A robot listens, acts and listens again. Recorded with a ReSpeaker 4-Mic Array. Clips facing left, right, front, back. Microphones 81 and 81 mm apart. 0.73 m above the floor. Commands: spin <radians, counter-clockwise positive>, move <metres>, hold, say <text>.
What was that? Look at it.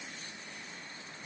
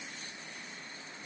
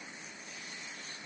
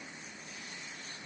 hold
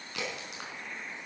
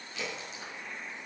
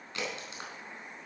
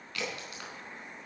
spin 1.13
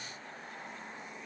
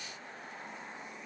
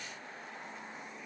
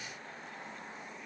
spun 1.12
say Facing where the crack came from. I can't hear it now.